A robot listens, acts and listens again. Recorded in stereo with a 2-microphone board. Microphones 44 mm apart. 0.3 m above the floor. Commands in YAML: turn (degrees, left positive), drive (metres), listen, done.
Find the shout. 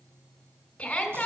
turn: 25
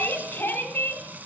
turn: 125
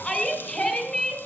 turn: 25
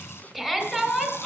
done: "Found it: a shout, straight ahead, 2 to 4 m away."